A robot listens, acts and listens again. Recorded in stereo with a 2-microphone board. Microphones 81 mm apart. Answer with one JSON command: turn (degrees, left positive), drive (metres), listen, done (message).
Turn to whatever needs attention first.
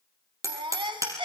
{"turn": -90}
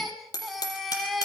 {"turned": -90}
{"done": "Found it: a baby crying, straight ahead, 2 to 4 m away."}